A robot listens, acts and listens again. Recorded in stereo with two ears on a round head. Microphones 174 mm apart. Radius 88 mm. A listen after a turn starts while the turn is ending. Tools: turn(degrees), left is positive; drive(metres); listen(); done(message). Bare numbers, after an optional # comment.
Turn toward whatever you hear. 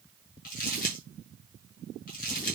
# The crumpling: about 50° left or 130° left.
turn(50)
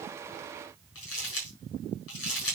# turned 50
# So it is at 85° left.
turn(85)
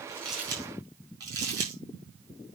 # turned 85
# The crumpling is now 20° right.
turn(-20)
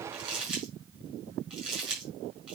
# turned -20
done("Facing the crumpling, over 4 m away.")